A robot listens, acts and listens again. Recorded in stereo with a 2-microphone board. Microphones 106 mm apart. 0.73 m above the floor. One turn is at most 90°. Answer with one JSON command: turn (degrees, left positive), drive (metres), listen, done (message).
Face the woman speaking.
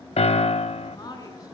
{"turn": 35}
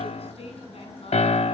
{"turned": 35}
{"turn": 90}
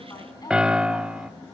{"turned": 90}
{"turn": 40}
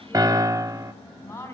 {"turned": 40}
{"turn": 25}
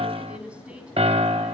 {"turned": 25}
{"turn": -10}
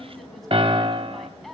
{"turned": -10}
{"done": "Found it: a woman speaking, straight ahead."}